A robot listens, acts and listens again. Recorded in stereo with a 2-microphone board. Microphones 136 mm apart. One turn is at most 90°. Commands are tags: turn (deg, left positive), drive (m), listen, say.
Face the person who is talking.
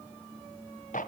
<listen/>
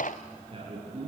<turn deg="-40"/>
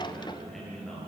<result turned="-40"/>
<say>Found it: a man speaking, straight ahead.</say>